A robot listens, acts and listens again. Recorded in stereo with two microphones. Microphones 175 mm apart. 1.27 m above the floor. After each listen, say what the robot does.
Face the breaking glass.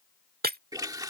Turn 60° right.
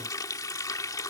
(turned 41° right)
Keep listening.
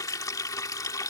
I heard breaking glass, but can't make it out now. It was about 15° right or 80° right.